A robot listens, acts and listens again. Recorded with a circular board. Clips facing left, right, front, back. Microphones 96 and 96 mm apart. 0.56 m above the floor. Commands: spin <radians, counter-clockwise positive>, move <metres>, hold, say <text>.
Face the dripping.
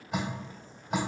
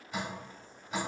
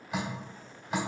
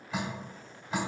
spin 1.31
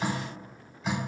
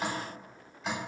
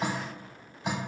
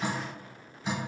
say Found it: dripping, straight ahead.